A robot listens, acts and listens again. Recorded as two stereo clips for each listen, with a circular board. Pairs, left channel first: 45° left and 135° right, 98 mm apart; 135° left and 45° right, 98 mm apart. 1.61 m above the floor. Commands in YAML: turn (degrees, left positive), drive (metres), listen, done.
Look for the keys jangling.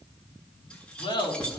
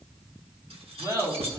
turn: -35
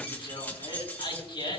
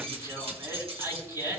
turn: -25
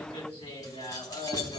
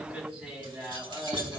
done: "Found it: keys jangling, straight ahead."